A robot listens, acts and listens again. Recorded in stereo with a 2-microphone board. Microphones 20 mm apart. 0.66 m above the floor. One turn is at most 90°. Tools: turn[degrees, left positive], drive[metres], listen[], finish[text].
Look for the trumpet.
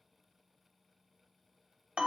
Action: listen[]
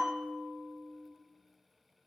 Action: listen[]
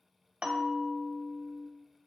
Action: finish[I can't make out a trumpet, only a bell.]